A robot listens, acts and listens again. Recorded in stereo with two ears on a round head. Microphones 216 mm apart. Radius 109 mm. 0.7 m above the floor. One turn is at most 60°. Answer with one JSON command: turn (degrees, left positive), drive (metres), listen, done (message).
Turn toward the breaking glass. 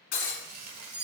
{"turn": 40}
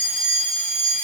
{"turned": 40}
{"listen": true}
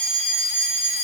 {"done": "I heard breaking glass, but can't make it out now. It was about straight ahead or 100° left."}